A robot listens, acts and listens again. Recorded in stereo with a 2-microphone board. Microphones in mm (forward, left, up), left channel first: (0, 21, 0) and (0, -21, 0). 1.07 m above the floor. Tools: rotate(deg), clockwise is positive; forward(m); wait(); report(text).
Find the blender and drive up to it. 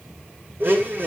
rotate(60)
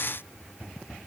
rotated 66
wait()
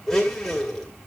forward(1.0)
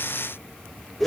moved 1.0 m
forward(1.0)
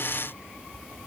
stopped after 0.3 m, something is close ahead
wait()
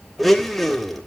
report("Arrived at the blender, straight ahead.")